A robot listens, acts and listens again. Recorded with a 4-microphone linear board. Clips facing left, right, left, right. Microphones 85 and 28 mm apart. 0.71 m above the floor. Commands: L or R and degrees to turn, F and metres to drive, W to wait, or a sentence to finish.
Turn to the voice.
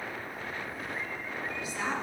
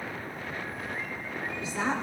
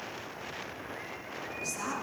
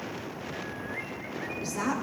R30
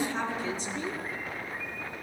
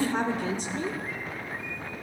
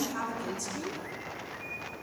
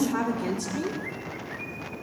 R120
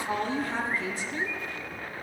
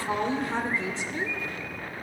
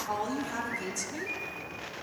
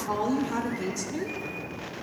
R25
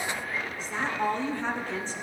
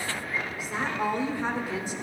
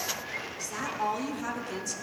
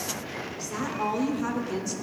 R10
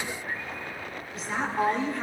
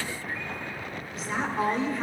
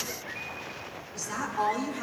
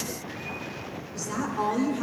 Found it: a woman speaking, straight ahead.